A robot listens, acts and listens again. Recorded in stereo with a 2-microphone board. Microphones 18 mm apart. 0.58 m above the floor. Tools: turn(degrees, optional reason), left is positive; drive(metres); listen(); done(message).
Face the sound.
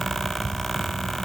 listen()
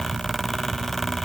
listen()
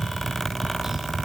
done("I can't make out anything.")